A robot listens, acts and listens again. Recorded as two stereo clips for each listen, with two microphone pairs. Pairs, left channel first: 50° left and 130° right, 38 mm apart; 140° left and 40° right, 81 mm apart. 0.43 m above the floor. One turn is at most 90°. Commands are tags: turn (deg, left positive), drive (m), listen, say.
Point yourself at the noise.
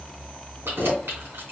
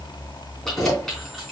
<turn deg="-90"/>
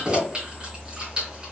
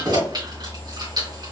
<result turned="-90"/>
<turn deg="-70"/>
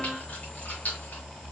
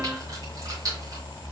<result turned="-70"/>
<listen/>
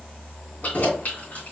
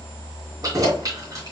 <say>Found it: keys jangling, straight ahead.</say>